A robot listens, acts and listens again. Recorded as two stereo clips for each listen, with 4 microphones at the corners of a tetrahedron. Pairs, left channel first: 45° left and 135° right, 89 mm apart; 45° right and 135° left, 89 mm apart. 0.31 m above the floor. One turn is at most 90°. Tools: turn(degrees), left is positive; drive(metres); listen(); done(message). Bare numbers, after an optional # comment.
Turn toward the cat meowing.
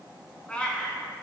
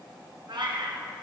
# The cat meowing: 120° left.
turn(90)
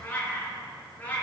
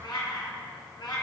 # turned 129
# The cat meowing is now 25° right.
turn(-25)
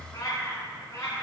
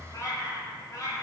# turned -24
done("Found it: a cat meowing, straight ahead.")